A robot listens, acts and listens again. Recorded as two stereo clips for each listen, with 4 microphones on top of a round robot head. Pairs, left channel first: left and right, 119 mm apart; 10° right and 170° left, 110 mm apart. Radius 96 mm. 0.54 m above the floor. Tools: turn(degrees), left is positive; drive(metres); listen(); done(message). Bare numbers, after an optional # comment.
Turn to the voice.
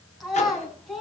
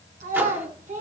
# The child speaking: straight behind.
turn(180)
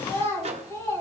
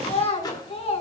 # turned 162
# The child speaking is now 20° left.
turn(20)
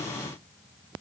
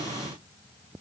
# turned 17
listen()
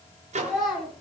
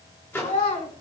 done("Found it: a child speaking, straight ahead.")